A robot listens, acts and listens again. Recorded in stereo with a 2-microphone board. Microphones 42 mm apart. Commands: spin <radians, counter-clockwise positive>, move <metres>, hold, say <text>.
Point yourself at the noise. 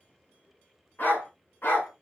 spin 1.13
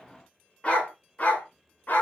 spin 0.87
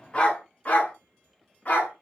spin 0.70
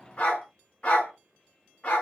spin 0.52
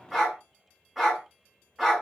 spin -0.17
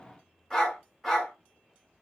say Found it: a dog barking, straight ahead.